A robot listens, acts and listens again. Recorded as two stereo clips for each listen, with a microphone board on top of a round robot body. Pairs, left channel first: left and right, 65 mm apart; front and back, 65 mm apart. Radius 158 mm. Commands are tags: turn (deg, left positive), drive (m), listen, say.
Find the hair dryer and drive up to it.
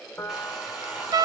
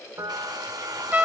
<turn deg="-170"/>
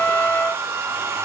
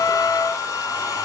<turn deg="-30"/>
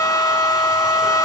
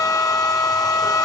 <listen/>
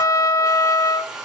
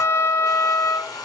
<drive m="1.0"/>
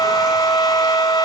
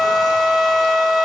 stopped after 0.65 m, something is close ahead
<listen/>
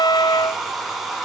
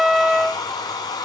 <say>Something is in my way. I am facing the hair dryer but have not reached it.</say>